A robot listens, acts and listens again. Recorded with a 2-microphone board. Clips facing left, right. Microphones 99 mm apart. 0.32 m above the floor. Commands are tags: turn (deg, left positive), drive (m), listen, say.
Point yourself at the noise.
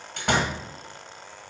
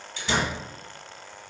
<turn deg="60"/>
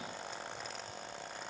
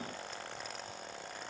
<listen/>
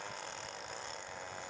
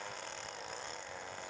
<say>I heard a door slam, but can't make it out now. It was about straight ahead or 60° left.</say>